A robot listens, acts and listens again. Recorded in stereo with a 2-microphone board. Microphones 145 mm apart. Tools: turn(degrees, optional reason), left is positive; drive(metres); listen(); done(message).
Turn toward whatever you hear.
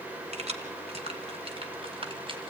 turn(degrees=-40, reason="The keys jangling: about 40° right or 140° right.")
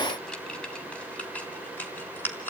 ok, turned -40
turn(degrees=15, reason="So it is at 15° left.")
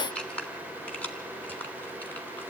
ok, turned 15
turn(degrees=10, reason="The keys jangling is now 10° left.")
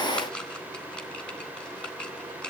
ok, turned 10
done("Facing the keys jangling, 2 to 4 m away.")